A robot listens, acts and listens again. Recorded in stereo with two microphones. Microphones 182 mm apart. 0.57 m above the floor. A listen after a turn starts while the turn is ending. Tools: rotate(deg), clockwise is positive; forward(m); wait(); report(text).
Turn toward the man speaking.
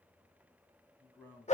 rotate(-30)
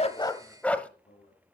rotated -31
rotate(-140)
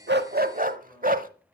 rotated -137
wait()
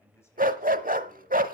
rotate(-15)
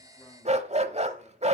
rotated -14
wait()
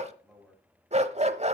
report("Found it: a man speaking, straight ahead, over 4 m away.")